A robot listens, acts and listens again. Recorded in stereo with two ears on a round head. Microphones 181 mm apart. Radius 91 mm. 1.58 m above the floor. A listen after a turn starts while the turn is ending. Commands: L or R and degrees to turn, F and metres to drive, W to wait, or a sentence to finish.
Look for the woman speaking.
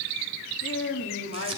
L70
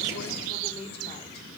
L30
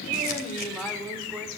Facing the woman speaking.